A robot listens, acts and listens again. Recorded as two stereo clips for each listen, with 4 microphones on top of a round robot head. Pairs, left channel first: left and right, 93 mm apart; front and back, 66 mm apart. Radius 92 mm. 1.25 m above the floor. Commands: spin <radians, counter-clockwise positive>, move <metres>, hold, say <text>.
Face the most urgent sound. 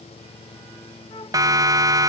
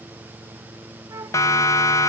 spin -0.70
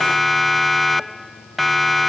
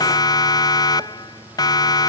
say Found it: a siren, straight ahead.